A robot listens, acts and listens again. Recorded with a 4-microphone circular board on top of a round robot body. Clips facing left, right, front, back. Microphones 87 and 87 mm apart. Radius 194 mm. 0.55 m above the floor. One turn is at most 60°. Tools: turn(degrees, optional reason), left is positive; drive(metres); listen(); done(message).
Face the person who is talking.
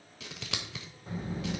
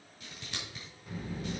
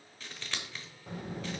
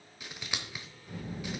turn(degrees=30, reason="The child speaking: 30° left.")
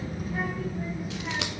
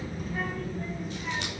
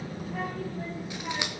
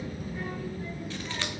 done("Found it: a child speaking, straight ahead.")